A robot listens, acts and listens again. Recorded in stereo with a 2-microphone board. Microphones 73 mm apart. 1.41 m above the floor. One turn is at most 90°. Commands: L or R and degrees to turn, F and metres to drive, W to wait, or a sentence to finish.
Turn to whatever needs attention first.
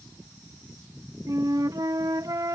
W
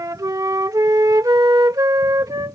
W
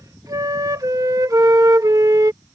I can't make out anything urgent, only a flute.